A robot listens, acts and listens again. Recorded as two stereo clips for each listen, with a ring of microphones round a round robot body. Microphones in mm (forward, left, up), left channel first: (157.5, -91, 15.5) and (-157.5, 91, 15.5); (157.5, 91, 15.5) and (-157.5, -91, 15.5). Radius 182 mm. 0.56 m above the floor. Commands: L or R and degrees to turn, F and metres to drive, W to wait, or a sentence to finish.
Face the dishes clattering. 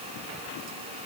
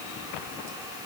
W
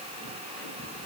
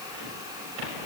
W
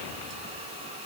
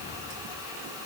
I can't make out dishes clattering.